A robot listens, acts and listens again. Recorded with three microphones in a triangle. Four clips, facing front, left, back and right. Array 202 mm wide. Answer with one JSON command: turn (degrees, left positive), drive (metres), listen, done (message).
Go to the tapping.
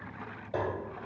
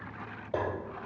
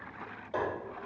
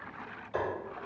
{"turn": 85}
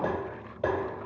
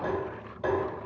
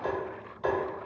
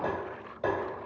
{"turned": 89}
{"drive": 1.0}
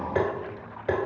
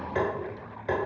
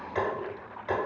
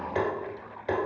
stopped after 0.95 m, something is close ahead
{"done": "I am next to the tapping."}